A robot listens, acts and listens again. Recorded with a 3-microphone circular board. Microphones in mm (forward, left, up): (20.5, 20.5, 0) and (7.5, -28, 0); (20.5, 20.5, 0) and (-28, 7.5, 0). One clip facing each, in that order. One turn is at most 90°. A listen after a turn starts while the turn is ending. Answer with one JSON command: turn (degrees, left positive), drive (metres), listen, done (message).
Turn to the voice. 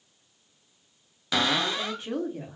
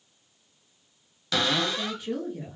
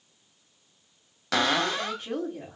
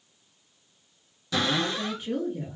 {"turn": 35}
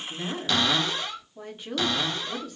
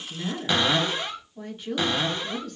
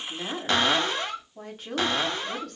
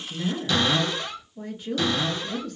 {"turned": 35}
{"done": "Found it: a woman speaking, straight ahead, 1 to 2 m away."}